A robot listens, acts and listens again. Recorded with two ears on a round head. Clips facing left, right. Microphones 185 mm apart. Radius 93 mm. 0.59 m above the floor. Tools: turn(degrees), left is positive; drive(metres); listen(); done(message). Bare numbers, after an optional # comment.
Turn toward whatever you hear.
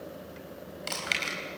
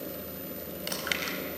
turn(-30)
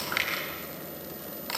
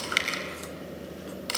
# So it is at 135° right.
turn(-135)
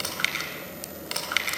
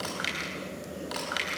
# The chewing is now 35° left.
turn(35)
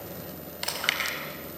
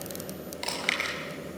# The chewing is now 10° left.
turn(10)
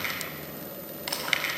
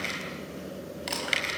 done("Found it: chewing, straight ahead, over 4 m away.")